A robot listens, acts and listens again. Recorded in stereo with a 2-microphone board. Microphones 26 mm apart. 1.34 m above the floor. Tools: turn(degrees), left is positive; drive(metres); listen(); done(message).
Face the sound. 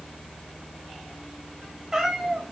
turn(degrees=-20)
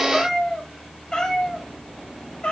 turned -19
turn(degrees=45)
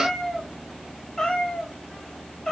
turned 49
turn(degrees=20)
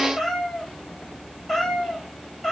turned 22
done("Facing the cat meowing.")